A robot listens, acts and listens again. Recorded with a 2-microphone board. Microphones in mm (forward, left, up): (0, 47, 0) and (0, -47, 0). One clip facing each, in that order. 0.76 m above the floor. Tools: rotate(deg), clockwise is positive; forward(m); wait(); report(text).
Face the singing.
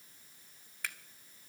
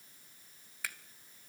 wait()
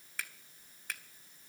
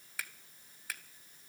wait()
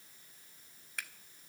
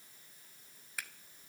report("I can't make out singing to turn to.")